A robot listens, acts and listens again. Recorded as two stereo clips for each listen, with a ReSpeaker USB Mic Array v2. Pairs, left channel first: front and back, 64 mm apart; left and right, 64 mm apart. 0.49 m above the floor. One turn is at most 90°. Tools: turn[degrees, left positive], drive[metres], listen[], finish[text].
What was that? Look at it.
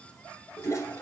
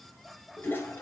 Thought: The toilet flushing: 35° left.
Action: turn[35]
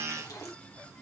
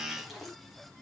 Action: finish[Found it: a toilet flushing, straight ahead.]